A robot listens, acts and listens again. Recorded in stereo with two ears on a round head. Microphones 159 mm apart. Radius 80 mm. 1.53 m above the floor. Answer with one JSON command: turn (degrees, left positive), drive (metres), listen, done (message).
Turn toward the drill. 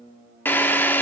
{"turn": 30}
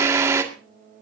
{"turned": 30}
{"turn": -15}
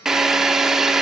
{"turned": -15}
{"done": "Found it: a drill, straight ahead, 2 to 4 m away."}